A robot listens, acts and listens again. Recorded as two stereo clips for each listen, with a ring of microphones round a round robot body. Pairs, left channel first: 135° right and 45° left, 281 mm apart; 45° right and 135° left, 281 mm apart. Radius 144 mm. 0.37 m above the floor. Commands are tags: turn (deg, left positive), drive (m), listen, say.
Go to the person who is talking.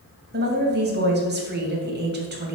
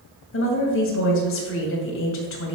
<drive m="1.0"/>
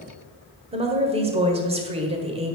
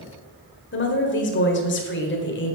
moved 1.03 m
<turn deg="-15"/>
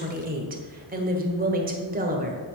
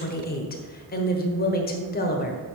<drive m="1.0"/>
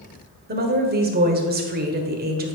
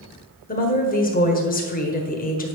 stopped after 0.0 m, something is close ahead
<say>I am next to the woman speaking.</say>